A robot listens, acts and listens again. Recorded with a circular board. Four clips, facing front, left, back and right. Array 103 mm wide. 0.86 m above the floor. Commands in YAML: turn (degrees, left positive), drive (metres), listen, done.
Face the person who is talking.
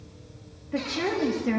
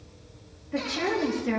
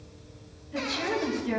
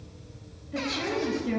turn: 35
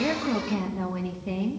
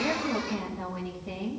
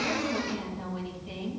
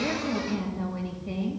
done: "Facing the woman speaking."